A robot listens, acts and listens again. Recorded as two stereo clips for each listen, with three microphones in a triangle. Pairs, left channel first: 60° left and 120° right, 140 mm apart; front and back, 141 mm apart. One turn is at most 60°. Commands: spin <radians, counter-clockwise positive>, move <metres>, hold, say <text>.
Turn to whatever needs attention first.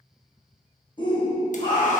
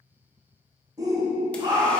spin 1.05
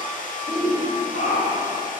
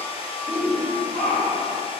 spin 1.05
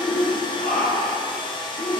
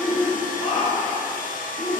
spin 0.61
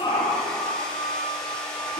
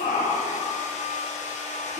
spin 0.17
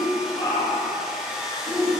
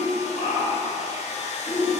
say Found it: a shout, straight ahead.